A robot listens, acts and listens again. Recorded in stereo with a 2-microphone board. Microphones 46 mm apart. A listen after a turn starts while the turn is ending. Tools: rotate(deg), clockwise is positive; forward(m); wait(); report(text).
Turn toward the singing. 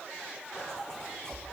wait()
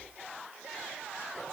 wait()
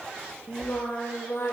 rotate(-65)
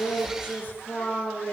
rotate(-50)
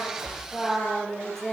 report("Found it: singing, straight ahead.")